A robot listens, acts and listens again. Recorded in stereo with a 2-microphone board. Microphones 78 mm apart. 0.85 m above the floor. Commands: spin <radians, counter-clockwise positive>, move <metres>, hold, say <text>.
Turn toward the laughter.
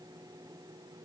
hold
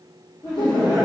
spin 1.31
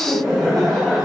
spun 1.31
spin 0.17
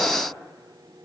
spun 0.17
hold
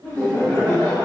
say Found it: laughter, straight ahead.